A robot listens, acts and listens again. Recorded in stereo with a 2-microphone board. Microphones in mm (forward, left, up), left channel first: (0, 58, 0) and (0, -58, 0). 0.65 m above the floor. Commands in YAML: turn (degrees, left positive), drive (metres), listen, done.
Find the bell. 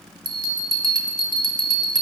turn: -40
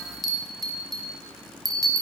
done: "Found it: a bell, straight ahead, under 1 m away."